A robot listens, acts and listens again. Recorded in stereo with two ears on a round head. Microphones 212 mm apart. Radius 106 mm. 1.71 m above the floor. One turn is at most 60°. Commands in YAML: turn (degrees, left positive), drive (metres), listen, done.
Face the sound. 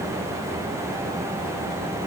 listen: true
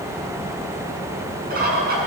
turn: -40
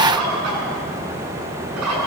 turn: -60
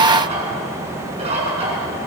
turn: -25
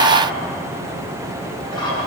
turn: 20
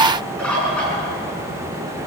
done: "Facing the bird."